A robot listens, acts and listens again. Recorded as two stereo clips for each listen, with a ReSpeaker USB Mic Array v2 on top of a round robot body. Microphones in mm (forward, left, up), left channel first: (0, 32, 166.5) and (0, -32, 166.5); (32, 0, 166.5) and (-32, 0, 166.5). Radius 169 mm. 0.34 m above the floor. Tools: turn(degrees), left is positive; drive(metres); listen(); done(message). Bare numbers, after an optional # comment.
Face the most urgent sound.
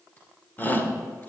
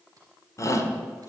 # The shout: 30° left.
turn(30)
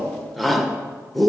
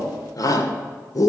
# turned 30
done("Found it: a shout, straight ahead.")